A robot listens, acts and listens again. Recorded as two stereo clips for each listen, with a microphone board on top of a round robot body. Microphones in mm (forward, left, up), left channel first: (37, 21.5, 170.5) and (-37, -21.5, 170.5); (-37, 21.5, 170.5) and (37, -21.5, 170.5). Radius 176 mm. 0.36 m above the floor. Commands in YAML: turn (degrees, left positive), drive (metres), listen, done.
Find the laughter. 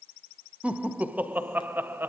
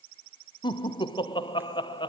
turn: 145
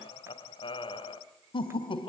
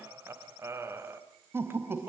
turn: 35
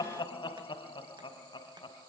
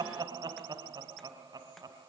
turn: 10
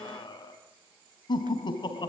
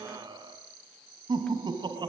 done: "Facing the laughter."